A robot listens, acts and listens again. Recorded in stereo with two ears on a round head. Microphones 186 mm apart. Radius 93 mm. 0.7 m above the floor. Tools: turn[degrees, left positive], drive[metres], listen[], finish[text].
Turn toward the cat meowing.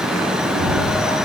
Thought: The cat meowing: about 50° left or 130° left.
Action: turn[50]
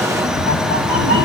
Thought: So it is at 70° left.
Action: turn[70]
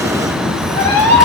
Thought: The cat meowing is now 10° left.
Action: turn[10]
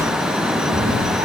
Thought: The cat meowing is now 10° right.
Action: turn[-10]
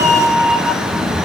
Action: finish[Facing the cat meowing.]